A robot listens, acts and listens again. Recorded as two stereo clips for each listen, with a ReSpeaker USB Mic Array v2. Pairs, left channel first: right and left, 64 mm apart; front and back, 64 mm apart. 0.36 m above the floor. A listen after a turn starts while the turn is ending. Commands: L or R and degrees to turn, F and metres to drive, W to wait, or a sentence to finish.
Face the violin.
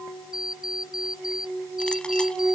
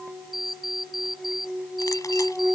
W
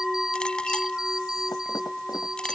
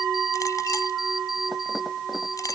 W
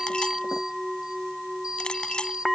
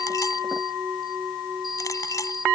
I can't make out a violin to turn to.